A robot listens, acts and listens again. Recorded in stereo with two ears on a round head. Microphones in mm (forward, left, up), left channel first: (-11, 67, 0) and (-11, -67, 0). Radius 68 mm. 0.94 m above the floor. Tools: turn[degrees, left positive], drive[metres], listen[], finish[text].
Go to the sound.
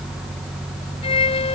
Thought: The violin: about 45° left or 135° left.
Action: turn[45]
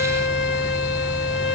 Thought: So it is at 85° left.
Action: turn[85]
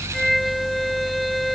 Action: drive[1.0]
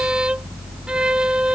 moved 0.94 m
Action: drive[1.0]
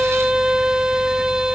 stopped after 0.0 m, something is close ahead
Action: finish[Arrived at the violin, straight ahead.]